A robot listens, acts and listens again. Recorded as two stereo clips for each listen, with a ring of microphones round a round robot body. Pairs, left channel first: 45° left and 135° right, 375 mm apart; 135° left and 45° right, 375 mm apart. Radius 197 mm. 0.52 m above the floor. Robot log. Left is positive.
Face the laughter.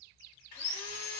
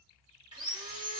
cmd idle
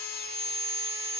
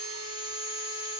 cmd idle
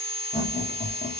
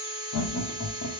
note: The laughter: 105° left.
cmd yaw +105
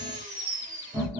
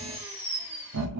note: The laughter is now 60° right.
cmd yaw -60
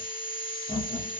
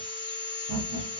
note: The laughter is now 30° right.
cmd yaw -30
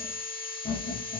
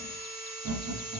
end: Facing the laughter, 1 to 2 m away.